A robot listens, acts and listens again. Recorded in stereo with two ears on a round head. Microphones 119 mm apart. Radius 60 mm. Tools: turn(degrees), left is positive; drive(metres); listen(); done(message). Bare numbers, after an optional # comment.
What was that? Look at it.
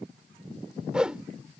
turn(-30)
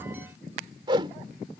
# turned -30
# So it is at 140° right.
turn(-140)
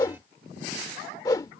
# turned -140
# The whoosh is now 30° left.
turn(30)
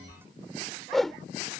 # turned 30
done("Facing the whoosh.")